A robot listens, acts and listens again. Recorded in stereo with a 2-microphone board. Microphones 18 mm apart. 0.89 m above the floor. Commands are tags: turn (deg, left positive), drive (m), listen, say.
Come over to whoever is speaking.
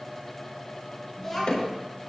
<turn deg="30"/>
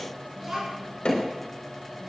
<turn deg="-15"/>
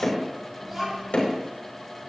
<drive m="1.0"/>
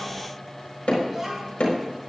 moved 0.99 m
<turn deg="-15"/>
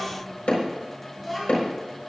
<drive m="1.0"/>
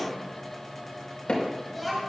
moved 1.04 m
<drive m="1.0"/>
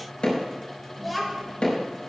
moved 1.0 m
<drive m="1.0"/>
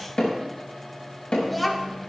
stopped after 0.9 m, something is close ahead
<say>I am next to the child speaking.</say>